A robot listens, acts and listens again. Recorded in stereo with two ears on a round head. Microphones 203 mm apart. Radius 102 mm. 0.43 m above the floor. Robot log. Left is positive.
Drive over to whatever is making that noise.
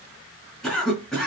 cmd yaw +30
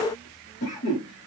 note: So it is at 145° left.
cmd yaw +145
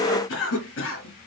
note: The cough is now 60° left.
cmd yaw +60
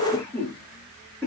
note: The cough is now 10° left.
cmd yaw +10
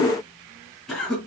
cmd fwd 1.0
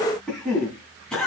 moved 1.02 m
cmd fwd 1.0
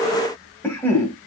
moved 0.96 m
note: The cough is now 10° left.
cmd yaw +10
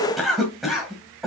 cmd fwd 1.0
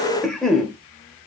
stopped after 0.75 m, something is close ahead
end: I am next to the cough.